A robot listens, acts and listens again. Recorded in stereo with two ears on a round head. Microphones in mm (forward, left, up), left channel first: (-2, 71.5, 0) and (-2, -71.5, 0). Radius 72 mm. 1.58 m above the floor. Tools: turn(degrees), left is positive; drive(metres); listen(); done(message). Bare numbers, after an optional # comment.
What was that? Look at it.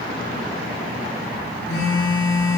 turn(90)
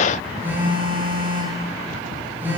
# So it is at 10° right.
turn(-10)
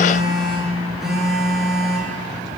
done("Facing the phone buzzing, over 4 m away.")